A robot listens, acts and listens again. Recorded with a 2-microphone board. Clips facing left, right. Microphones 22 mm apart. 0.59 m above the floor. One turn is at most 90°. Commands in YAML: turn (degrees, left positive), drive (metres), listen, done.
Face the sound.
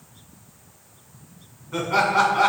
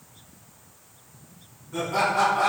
turn: 50
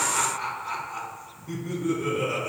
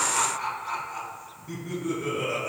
turn: 10
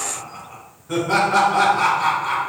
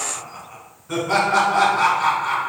done: "Found it: laughter, straight ahead, 1 to 2 m away."